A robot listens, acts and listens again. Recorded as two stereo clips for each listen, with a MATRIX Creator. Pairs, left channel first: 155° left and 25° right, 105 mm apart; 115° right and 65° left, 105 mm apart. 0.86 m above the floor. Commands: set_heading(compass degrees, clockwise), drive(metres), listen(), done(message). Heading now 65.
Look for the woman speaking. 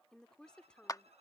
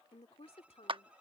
set_heading(185)
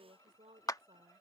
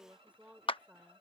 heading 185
set_heading(195)
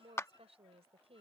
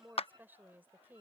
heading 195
done("Found it: a woman speaking, straight ahead.")